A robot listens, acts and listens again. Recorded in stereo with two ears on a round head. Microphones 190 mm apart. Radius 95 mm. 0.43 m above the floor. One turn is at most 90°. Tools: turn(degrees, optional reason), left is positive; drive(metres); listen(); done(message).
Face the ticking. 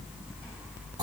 listen()
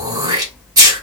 listen()
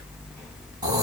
done("I can't make out ticking, only throat clearing.")